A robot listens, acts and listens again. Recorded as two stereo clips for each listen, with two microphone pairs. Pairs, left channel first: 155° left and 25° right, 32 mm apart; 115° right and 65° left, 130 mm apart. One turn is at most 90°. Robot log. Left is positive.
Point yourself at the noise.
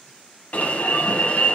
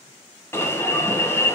note: The alarm: 175° left.
cmd yaw +90
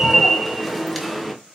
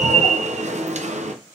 note: The alarm is now 65° left.
cmd yaw +65
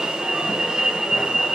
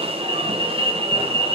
note: The alarm is now 30° left.
cmd yaw +30
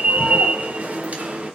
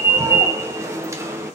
end: Facing the alarm, under 1 m away.